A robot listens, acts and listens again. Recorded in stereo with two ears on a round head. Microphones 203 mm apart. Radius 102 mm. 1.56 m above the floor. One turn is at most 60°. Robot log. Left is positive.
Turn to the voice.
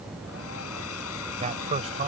note: The man speaking: about 30° right or 150° right.
cmd yaw -30
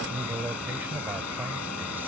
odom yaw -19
note: So it is at 10° right.
cmd yaw -10
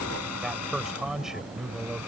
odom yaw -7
end: Found it: a man speaking, straight ahead.